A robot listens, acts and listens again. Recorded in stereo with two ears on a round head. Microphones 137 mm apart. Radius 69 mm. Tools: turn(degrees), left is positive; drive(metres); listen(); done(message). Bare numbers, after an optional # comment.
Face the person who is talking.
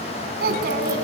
# The child speaking: about 75° right or 105° right.
turn(-75)
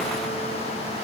listen()
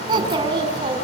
# So it is at 30° right.
turn(-30)
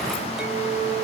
listen()
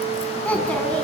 # The child speaking is now 10° left.
turn(10)
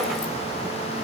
listen()
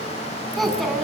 done("Found it: a child speaking, straight ahead.")